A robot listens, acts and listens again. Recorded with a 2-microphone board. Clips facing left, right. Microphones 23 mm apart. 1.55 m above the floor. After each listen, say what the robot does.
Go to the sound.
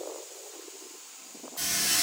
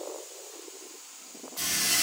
Turn 50° right.
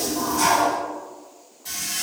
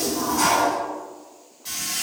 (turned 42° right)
Turn 20° right.
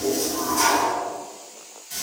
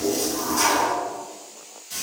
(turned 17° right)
Drive 1.0 m forward.
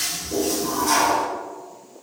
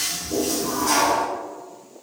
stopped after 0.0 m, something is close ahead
Something is in my way. I am facing the toilet flushing but have not reached it.